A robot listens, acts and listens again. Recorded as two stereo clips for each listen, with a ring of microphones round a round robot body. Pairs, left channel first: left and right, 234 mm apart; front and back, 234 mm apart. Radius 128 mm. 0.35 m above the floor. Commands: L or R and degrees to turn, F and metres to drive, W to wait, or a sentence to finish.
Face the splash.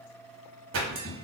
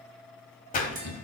R55
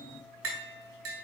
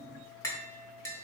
I heard a splash from this way, but can't make it out now.